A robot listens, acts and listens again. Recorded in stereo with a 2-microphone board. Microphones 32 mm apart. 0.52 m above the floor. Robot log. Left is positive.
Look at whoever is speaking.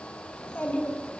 note: The child speaking: about 55° left or 125° left.
cmd yaw +55
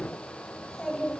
note: So it is at 20° left.
cmd yaw +20
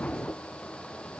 cmd idle
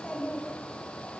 note: The child speaking is now 25° left.
cmd yaw +25
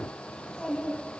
note: The child speaking is now 15° left.
cmd yaw +15
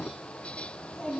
end: Facing the child speaking, 2 to 4 m away.